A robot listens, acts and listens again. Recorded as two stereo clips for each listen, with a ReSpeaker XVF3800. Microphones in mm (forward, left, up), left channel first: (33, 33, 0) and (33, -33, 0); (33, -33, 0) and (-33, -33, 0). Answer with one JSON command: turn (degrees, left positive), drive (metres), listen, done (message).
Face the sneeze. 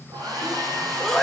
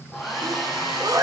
{"turn": 175}
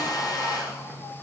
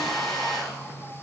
{"done": "I heard a sneeze from this way, but can't make it out now."}